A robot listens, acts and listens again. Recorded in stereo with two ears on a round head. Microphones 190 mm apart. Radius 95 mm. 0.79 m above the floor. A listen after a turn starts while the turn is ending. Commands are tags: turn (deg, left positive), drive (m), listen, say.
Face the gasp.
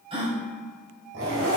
<turn deg="-30"/>
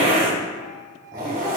<listen/>
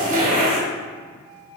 <say>I heard a gasp, but can't make it out now. It was about straight ahead or 120° right.</say>